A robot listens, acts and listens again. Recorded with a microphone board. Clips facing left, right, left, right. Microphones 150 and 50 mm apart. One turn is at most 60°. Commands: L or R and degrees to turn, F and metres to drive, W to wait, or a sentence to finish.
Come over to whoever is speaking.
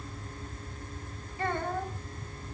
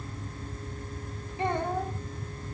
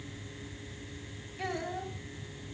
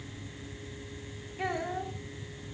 R20
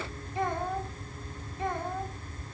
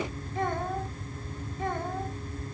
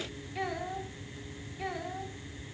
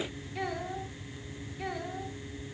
F1.0
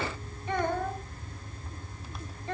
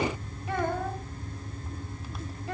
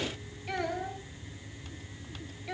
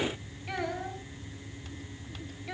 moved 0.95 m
F1.0
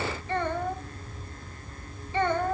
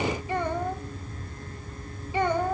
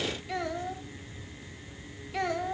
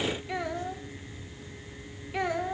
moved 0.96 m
R15
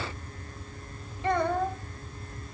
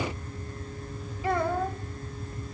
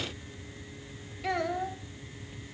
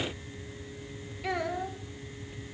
F1.0
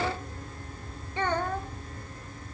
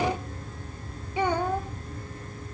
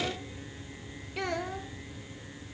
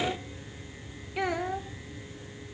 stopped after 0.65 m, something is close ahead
R15
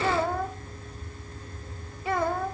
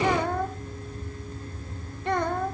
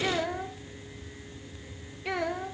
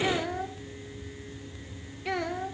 I am next to the child speaking.